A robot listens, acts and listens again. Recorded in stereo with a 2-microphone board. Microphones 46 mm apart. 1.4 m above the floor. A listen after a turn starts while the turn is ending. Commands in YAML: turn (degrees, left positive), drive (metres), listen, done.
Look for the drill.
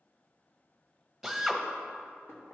turn: 30
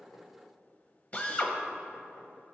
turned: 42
turn: 140
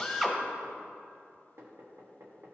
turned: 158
turn: -20
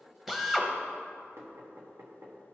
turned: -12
done: "Facing the drill."